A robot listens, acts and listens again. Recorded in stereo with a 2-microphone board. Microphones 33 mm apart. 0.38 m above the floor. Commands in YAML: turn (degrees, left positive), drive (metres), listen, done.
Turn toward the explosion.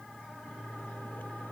listen: true
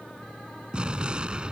turn: -30
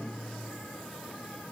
listen: true
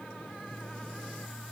done: "I heard an explosion, but can't make it out now. It was about straight ahead or 120° right."